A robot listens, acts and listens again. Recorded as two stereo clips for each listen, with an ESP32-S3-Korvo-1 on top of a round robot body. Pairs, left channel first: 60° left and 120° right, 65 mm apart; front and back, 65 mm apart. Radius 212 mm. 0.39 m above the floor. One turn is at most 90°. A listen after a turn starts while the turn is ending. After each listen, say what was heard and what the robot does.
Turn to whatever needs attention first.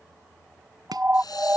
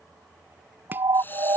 The siren: 175° left. Turn 90° left.
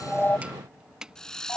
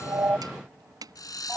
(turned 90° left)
Nothing new. It was at 85° left. Turn 85° left.
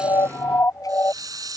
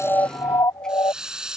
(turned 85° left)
The siren is now 15° left. Turn 15° left.
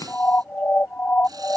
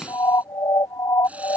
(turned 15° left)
Facing the siren.